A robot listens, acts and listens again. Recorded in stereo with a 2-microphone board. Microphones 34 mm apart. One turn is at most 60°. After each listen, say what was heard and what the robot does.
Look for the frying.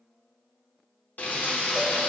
The frying: about 70° left or 110° left. Turn 60° left.
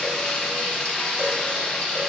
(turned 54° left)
So it is at 45° left. Turn 45° left.
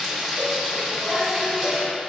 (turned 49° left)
Found it: frying, straight ahead.